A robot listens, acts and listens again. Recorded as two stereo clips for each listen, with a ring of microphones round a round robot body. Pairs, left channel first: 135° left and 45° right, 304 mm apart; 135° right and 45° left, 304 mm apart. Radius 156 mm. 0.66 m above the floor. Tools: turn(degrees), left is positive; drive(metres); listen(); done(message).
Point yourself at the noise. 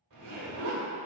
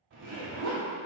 turn(degrees=-10)
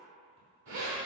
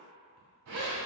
done("Found it: a zipper, straight ahead, 1 to 2 m away.")